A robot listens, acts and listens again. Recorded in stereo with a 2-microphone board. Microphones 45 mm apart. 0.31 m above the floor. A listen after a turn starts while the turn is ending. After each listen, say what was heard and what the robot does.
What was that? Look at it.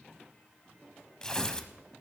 The tearing paper: about 15° left or 165° left. Turn 15° left.
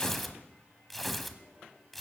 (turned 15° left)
Facing the tearing paper, under 1 m away.